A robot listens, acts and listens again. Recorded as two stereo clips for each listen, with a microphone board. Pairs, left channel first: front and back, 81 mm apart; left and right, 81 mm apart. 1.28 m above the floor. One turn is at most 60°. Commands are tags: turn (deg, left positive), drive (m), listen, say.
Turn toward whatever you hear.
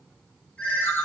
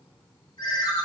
<turn deg="60"/>
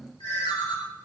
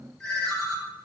<say>Facing the ringtone.</say>